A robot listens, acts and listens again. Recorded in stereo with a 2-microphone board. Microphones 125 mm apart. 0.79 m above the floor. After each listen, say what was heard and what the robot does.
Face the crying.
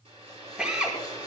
Keep listening.
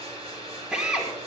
Keep listening.
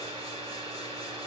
I can't make out crying to turn to.